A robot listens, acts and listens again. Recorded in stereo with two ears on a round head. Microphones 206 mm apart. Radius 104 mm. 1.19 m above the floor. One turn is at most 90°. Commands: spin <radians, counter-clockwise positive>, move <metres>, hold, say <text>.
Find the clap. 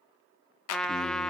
spin 1.31
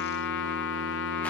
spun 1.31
hold
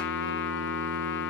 hold
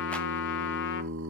say I heard a clap, but can't make it out now. It was about straight ahead or 30° left.